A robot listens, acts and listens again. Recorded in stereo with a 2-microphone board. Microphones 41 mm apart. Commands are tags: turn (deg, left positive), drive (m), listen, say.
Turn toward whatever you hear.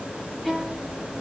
<turn deg="-30"/>
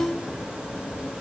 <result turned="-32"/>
<turn deg="25"/>
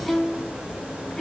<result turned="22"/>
<say>Facing the violin.</say>